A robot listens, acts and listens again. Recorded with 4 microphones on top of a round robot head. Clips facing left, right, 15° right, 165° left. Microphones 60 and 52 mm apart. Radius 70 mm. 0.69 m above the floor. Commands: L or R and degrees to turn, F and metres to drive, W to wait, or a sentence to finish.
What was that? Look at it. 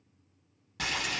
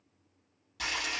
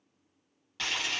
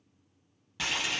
L90
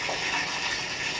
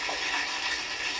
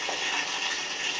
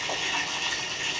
L25
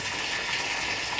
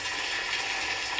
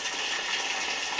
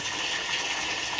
Found it: boiling, straight ahead.